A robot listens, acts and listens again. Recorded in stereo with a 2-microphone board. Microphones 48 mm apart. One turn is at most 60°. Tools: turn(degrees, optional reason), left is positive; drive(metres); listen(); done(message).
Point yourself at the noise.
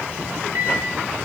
turn(degrees=-60, reason="The microwave: about 65° right or 115° right.")
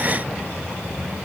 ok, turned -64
listen()
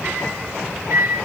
turn(degrees=-50, reason="So it is at 50° right.")
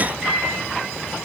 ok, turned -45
done("Facing the microwave, over 4 m away.")